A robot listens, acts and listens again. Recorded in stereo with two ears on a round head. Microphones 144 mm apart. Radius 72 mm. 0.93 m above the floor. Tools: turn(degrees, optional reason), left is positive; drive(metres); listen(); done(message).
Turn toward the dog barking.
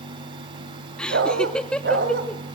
turn(degrees=-65, reason="The dog barking: about 65° right or 115° right.")
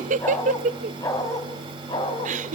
turn(degrees=30, reason="So it is at 30° left.")
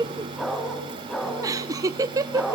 done("Found it: a dog barking, straight ahead.")